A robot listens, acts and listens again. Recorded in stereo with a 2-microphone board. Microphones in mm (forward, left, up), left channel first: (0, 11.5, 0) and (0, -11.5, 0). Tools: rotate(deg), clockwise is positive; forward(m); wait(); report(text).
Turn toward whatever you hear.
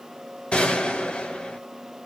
rotate(-50)
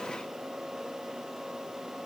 wait()
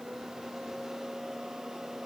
report("I heard a gunshot, but can't make it out now. It was about straight ahead or 80° left.")